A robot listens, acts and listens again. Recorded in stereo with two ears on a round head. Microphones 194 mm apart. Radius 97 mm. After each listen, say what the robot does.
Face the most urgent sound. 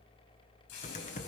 Keep listening.
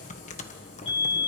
Turn 25° left.
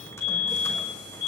Turn 135° left.
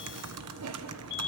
Turn 45° left.
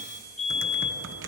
Found it: a fire alarm, straight ahead.